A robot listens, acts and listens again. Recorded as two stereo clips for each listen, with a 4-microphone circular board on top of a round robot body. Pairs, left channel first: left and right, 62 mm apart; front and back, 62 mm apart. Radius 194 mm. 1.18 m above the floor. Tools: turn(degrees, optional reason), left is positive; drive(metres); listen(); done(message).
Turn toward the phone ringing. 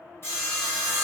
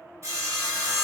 listen()
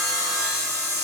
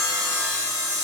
listen()
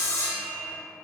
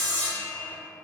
done("I can't make out a phone ringing to turn to.")